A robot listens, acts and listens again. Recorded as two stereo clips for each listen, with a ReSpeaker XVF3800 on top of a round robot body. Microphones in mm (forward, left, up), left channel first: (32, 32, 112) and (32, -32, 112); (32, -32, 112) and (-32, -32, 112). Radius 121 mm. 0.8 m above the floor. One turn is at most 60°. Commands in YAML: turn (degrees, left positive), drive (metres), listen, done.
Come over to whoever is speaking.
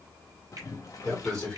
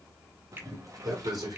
turn: 60
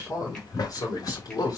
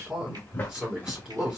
turn: 60
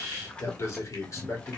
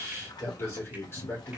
turn: 45
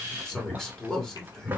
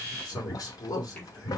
drive: 1.0
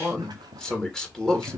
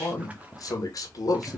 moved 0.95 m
drive: 1.0
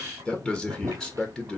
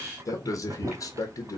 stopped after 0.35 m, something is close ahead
turn: 10
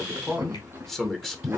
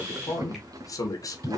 done: "I am next to the man speaking."